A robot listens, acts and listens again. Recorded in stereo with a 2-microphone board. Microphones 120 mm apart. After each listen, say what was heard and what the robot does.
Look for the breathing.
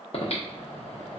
The breathing: about 60° left or 120° left. Turn 60° left.
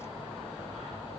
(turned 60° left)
So it is at 55° left. Turn 55° left.
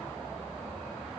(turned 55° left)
The breathing is now 20° left. Turn 20° left.
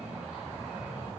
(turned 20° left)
The breathing is now 10° right. Turn 10° right.
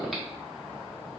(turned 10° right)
Facing the breathing, 1 to 2 m away.